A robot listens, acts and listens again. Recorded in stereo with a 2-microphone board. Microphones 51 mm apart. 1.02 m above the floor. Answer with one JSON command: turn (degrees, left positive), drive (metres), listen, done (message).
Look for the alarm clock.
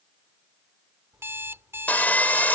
{"turn": -60}
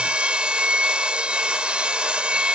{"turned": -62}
{"listen": true}
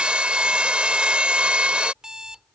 {"turn": -15}
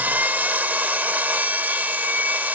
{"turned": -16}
{"listen": true}
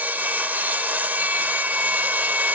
{"listen": true}
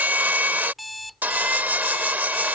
{"done": "Found it: an alarm clock, straight ahead."}